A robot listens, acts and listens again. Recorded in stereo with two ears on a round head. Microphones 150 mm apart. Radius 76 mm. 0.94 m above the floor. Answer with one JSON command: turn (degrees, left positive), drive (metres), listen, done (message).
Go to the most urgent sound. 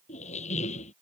{"listen": true}
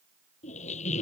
{"listen": true}
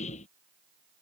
{"done": "I can't make out anything urgent, only a squeak."}